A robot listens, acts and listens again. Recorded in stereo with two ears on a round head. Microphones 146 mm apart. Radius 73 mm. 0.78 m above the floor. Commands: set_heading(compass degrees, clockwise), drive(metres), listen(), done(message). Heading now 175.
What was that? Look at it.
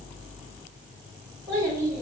set_heading(205)
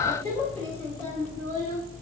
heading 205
set_heading(185)
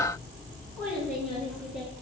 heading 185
done("Facing the child speaking.")